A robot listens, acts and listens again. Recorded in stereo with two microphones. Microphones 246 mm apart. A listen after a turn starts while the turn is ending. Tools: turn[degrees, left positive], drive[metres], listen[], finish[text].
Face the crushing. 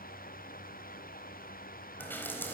Action: listen[]
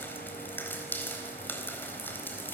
Action: listen[]
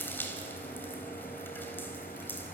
Action: finish[I can't make out crushing, only dripping.]